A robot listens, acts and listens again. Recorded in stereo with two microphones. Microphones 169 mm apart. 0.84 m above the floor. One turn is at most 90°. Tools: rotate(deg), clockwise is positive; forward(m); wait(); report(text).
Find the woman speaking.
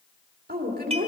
rotate(60)
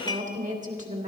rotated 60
rotate(50)
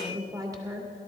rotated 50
rotate(20)
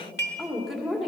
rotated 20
report("Facing the woman speaking, 2 to 4 m away.")